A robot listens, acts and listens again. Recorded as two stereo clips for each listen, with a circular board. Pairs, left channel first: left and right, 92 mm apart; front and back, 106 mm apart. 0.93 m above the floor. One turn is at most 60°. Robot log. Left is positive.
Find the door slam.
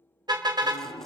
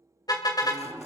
note: The door slam: 110° left.
cmd yaw +60
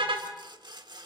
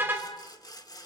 note: Nothing new. It was at 50° left.
cmd yaw +50
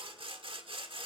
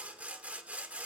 end: Facing where the door slam came from. I can't hear it now.